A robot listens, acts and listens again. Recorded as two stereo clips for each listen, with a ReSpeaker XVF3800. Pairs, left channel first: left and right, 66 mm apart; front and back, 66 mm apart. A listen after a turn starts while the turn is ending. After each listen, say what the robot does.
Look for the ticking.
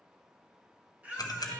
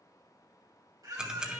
Turn 105° left.
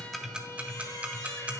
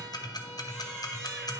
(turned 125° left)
Turn 20° right.
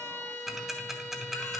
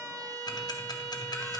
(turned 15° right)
Facing the ticking.